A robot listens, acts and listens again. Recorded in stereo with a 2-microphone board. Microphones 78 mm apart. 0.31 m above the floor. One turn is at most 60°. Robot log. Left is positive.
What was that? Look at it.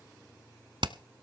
note: The hammering: about 75° right or 105° right.
cmd yaw -60
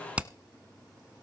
note: So it is at 15° right.
cmd yaw -15
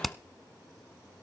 end: Found it: hammering, straight ahead.